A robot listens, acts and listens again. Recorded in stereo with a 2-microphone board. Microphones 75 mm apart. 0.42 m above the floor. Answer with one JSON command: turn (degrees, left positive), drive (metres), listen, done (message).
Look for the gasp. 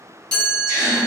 {"turn": -45}
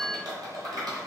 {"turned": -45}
{"listen": true}
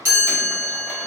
{"done": "I heard a gasp, but can't make it out now. It was about straight ahead or 90° right."}